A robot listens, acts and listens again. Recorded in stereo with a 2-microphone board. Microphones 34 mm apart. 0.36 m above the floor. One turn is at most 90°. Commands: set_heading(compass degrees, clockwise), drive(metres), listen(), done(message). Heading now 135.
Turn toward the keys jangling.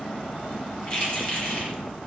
set_heading(110)
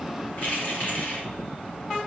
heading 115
set_heading(25)
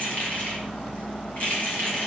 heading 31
set_heading(341)
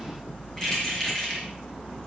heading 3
set_heading(343)
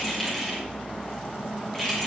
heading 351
set_heading(341)
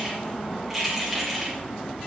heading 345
done("Found it: keys jangling, straight ahead.")